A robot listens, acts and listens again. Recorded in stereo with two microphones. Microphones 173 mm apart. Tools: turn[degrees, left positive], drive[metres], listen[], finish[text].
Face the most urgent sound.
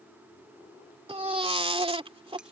Thought: The baby crying: about 35° right or 145° right.
Action: turn[-35]
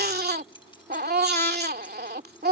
Thought: So it is at 110° right.
Action: turn[-110]
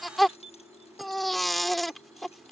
Action: finish[Found it: a baby crying, straight ahead.]